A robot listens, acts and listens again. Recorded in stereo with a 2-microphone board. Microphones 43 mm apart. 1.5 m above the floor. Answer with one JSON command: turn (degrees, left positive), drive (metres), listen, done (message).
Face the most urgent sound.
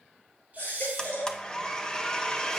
{"turn": 45}
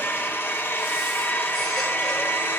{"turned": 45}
{"listen": true}
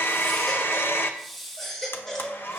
{"turn": 10}
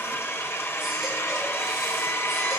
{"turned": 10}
{"listen": true}
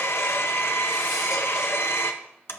{"listen": true}
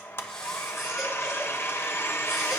{"done": "Facing where the baby crying came from. I can't hear it now."}